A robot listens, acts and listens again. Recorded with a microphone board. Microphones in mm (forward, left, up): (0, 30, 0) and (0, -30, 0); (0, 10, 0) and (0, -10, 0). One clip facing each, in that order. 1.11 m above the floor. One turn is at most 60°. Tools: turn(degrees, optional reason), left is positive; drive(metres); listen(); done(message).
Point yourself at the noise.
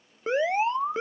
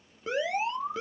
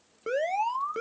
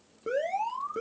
turn(degrees=35, reason="The alarm: about 35° left or 145° left.")
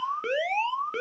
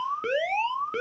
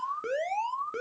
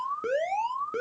done("Found it: an alarm, straight ahead.")